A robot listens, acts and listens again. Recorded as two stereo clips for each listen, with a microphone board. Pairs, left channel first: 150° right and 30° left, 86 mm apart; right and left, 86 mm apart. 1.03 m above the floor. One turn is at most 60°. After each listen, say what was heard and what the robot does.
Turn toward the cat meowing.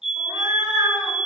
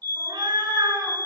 The cat meowing: 65° left. Turn 60° left.
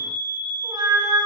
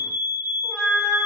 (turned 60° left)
Found it: a cat meowing, straight ahead, 2 to 4 m away.